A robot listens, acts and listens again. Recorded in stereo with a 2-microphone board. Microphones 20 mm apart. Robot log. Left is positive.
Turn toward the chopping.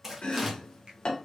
note: The chopping: about 55° left or 125° left.
cmd yaw +55
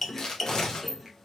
note: So it is at 10° left.
cmd yaw +10
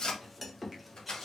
end: Found it: chopping, straight ahead.